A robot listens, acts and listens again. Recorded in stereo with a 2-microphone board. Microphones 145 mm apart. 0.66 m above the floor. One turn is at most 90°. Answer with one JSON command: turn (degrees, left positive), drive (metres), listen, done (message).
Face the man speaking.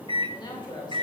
{"turn": 30}
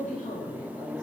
{"turn": 90}
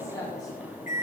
{"turn": 25}
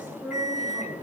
{"turn": -10}
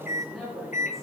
{"done": "Facing the man speaking, over 4 m away."}